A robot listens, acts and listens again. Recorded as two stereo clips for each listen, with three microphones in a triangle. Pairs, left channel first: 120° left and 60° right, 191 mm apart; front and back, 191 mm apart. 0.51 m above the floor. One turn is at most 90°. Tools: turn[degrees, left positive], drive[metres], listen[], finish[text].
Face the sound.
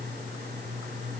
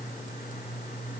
Action: listen[]
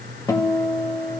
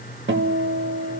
Thought: The guitar: 170° right.
Action: turn[-90]
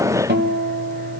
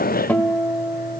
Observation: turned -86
Thought: The guitar is now 80° right.
Action: turn[-80]
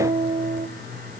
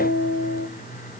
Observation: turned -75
Action: finish[Found it: a guitar, straight ahead.]